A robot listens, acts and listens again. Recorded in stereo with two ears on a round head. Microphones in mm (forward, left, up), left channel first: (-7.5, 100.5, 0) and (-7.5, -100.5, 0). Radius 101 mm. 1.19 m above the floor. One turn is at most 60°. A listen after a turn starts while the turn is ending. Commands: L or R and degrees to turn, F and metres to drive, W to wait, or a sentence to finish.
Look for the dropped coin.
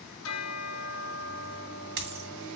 R55
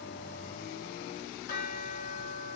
W
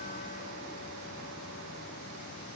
I heard a dropped coin, but can't make it out now. It was about straight ahead or 70° right.